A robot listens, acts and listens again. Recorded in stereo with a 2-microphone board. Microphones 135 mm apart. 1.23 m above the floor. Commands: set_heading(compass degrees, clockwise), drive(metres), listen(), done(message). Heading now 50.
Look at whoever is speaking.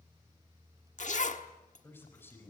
set_heading(35)
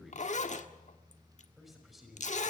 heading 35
done("Found it: a man speaking, straight ahead.")